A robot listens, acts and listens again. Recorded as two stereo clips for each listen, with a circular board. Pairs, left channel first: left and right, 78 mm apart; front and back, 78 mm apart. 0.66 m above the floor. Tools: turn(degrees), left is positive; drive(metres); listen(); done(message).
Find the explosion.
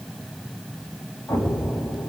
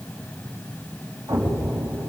turn(degrees=135)
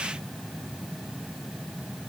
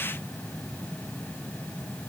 done("I heard an explosion from this way, but can't make it out now.")